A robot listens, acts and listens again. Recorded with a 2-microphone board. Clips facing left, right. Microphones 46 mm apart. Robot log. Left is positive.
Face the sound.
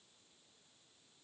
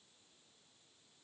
cmd idle
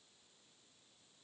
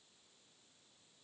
cmd idle
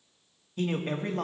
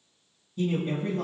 note: The man speaking: about 60° left or 120° left.
cmd yaw +60
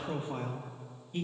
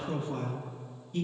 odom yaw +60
note: So it is at 25° left.
cmd yaw +25
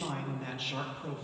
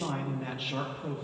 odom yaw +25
note: The man speaking is now 10° right.
cmd yaw -10
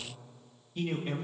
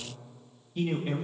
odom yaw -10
end: Facing the man speaking, 1 to 2 m away.